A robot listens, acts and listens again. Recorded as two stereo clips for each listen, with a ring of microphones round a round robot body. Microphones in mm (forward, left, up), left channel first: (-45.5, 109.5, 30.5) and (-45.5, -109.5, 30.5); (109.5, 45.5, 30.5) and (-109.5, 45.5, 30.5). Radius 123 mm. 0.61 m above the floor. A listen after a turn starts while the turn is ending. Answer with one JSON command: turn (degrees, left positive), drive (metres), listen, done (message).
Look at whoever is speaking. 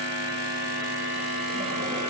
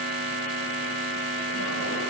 {"listen": true}
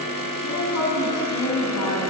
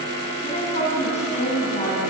{"turn": 60}
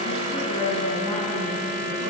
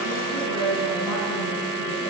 {"turn": 15}
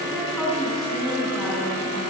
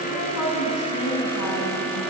{"done": "Found it: a woman speaking, straight ahead."}